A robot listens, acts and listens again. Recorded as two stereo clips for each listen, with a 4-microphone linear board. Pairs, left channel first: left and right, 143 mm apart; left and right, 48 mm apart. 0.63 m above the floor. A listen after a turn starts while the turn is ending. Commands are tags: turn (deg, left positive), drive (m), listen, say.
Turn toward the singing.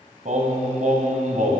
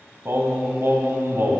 <turn deg="-65"/>
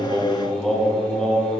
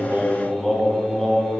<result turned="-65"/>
<say>Facing the singing, 2 to 4 m away.</say>